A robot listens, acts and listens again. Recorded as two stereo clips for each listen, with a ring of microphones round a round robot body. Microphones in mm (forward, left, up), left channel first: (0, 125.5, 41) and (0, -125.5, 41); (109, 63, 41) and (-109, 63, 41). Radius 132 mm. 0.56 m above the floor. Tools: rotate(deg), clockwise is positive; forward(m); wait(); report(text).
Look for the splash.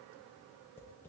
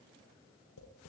wait()
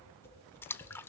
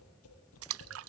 rotate(-170)
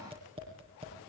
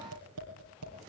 report("I heard a splash from this way, but can't make it out now.")